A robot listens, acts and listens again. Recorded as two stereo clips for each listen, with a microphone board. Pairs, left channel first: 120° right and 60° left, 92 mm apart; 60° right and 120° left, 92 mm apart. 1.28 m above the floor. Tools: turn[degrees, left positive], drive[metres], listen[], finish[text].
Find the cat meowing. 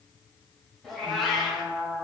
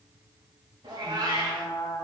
Thought: The cat meowing: 150° left.
Action: turn[150]
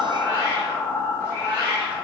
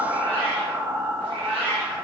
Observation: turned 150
Thought: The cat meowing is now 10° left.
Action: turn[10]
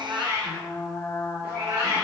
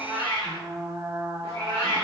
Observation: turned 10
Action: finish[Found it: a cat meowing, straight ahead, over 4 m away.]